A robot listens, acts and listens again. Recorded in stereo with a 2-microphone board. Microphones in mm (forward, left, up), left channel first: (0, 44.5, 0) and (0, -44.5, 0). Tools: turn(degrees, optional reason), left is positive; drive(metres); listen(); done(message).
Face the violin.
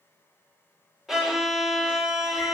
turn(degrees=-30)
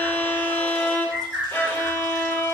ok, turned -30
turn(degrees=25, reason="So it is at 25° left.")
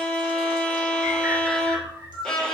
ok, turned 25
turn(degrees=10, reason="The violin is now 10° left.")
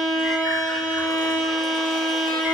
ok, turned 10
done("Found it: a violin, straight ahead.")